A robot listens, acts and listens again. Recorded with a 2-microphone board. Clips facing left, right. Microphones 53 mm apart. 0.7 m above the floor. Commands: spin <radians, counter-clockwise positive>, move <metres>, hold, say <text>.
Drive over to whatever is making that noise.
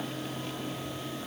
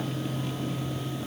hold
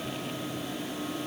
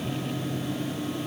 hold
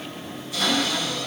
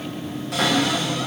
spin -1.57
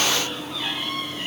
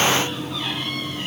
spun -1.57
hold
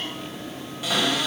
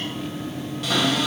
move 1.0
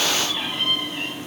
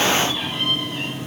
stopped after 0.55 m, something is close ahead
hold
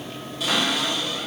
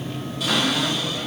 say Blocked. The cupboard door is further on, straight ahead.